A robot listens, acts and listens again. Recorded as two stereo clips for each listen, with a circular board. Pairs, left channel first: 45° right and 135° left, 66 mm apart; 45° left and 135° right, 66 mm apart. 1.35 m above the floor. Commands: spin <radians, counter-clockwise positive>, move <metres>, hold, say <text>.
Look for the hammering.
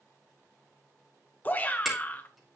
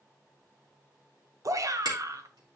spin -2.44
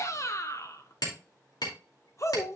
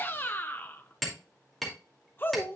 spin -0.79
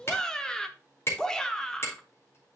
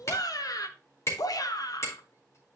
say Facing the hammering, 2 to 4 m away.